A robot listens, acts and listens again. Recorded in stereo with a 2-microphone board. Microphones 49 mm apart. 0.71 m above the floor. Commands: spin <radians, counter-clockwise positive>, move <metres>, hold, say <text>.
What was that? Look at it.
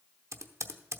spin -1.57
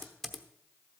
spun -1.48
say Facing the typing on a keyboard.